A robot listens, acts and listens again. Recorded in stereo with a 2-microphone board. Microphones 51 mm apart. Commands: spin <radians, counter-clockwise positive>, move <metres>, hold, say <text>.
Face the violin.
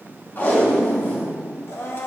hold
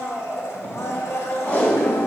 hold
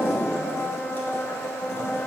say I can't make out a violin, only a blender and tape being pulled.